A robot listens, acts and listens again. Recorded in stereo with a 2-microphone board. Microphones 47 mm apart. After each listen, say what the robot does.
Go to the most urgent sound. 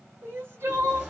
Turn 55° right.
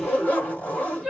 Drive 1.0 m forward.
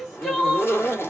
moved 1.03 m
Turn 10° left.
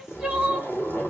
Drive 1.0 m forward.
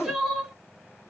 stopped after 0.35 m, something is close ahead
I am next to the crying.